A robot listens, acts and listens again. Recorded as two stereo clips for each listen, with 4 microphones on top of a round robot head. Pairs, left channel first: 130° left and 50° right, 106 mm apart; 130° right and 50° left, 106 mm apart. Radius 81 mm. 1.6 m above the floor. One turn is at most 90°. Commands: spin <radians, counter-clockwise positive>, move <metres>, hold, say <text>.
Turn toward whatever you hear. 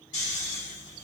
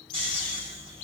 spin 1.57
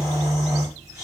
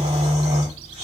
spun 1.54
spin 0.61
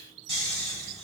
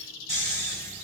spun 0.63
say Found it: snoring, straight ahead.